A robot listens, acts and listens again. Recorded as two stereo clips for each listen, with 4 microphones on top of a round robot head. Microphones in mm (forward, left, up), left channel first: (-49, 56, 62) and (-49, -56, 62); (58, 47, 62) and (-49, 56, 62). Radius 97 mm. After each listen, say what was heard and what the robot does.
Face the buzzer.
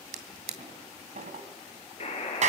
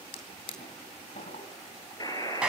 The buzzer: 50° left. Turn 50° left.
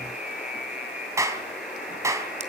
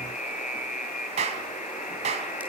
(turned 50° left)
Found it: a buzzer, straight ahead, over 4 m away.